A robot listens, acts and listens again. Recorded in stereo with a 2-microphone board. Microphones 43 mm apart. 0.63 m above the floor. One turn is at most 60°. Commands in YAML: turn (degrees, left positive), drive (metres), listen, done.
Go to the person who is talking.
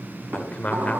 turn: 30
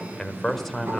drive: 1.0
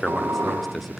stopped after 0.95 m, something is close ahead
done: "Arrived at the man speaking, straight ahead."